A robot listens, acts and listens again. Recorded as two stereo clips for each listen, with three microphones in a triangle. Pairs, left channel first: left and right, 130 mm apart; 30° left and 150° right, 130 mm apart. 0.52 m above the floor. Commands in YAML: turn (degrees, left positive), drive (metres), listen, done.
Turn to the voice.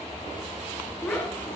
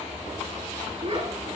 turn: 165
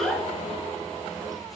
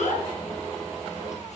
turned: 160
done: "Facing the child speaking."